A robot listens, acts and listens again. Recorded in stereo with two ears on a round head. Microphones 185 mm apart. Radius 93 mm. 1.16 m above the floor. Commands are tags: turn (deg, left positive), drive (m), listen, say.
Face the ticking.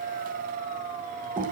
<listen/>
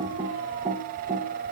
<listen/>
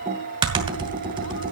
<say>I can't make out ticking, only typing on a keyboard.</say>